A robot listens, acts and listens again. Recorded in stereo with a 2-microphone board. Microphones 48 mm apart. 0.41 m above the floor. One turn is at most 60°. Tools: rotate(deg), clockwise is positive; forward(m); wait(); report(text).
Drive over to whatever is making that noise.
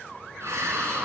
rotate(60)
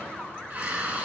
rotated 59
rotate(35)
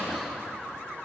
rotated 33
forward(1.0)
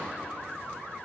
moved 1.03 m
wait()
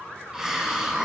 rotate(15)
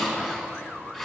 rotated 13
forward(1.0)
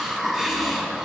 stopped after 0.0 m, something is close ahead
report("Something is in my way. I am facing the hiss but have not reached it.")